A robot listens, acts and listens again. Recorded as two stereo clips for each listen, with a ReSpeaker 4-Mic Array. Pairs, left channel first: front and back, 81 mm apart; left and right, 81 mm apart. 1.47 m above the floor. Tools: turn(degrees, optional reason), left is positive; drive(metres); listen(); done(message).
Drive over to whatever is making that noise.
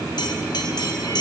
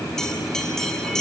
turn(degrees=10, reason="The bell: 10° left.")
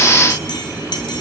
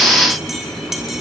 drive(metres=1.0)
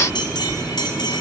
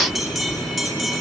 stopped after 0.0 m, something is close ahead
done("Blocked. The bell is further on, straight ahead.")